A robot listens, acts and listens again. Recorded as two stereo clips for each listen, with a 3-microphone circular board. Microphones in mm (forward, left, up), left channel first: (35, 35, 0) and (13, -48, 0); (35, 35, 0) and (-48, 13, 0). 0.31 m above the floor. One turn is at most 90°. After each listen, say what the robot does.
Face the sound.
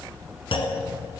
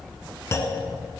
Turn 70° left.
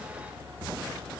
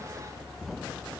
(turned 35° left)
Turn 35° left.
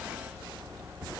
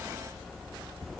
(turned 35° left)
I heard a clunk from this way, but can't make it out now.